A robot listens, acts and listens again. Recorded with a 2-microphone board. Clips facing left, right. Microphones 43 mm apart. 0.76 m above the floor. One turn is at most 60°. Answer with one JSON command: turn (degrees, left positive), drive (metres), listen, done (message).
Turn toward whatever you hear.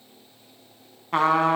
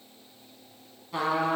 {"turn": 50}
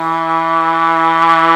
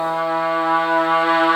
{"turn": 60}
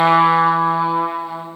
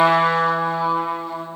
{"turn": 15}
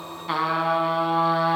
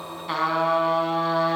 {"done": "Facing the trumpet, 1 to 2 m away."}